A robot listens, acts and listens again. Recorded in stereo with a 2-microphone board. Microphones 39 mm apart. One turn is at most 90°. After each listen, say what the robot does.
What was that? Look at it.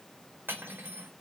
Turn 60° right.
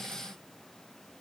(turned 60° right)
Keep listening.
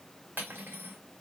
Turn 60° right.
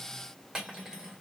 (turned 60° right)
Turn 15° right.
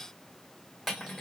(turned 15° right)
Facing the cutlery clinking, 1 to 2 m away.